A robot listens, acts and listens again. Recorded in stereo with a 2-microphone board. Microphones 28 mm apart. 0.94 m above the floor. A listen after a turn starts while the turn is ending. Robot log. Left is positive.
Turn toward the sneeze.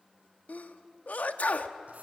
note: The sneeze: about 65° left or 115° left.
cmd yaw +65
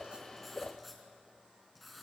cmd idle
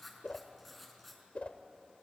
end: I heard a sneeze, but can't make it out now. It was about straight ahead or 50° left.